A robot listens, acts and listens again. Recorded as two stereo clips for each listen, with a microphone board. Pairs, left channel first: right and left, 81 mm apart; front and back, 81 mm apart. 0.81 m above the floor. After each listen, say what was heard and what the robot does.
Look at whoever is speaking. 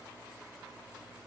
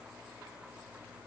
Keep listening.
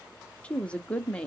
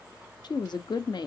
The woman speaking: 15° right. Turn 15° right.
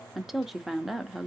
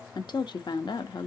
Facing the woman speaking.